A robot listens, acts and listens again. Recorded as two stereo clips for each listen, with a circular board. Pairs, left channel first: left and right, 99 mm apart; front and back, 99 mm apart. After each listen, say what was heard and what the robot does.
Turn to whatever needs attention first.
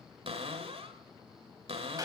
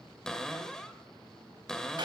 Keep listening.
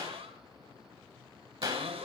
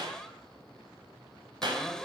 Keep listening.
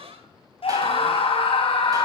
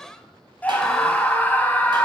The scream: 75° left. Turn 75° left.
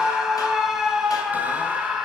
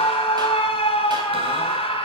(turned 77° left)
Found it: a scream, straight ahead.